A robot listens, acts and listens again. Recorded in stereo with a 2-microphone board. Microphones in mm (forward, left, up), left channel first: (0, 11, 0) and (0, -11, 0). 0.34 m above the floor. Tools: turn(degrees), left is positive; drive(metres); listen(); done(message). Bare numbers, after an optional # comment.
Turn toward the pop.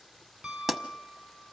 turn(-30)
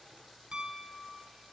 listen()
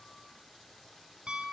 done("I heard a pop, but can't make it out now. It was about 15° left or 135° right.")